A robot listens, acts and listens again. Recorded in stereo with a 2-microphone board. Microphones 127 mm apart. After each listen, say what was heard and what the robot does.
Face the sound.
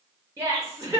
The laughter: about 20° right or 160° right. Turn 20° right.
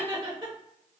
So it is at 140° right. Turn 140° right.
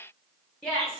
Facing the laughter, under 1 m away.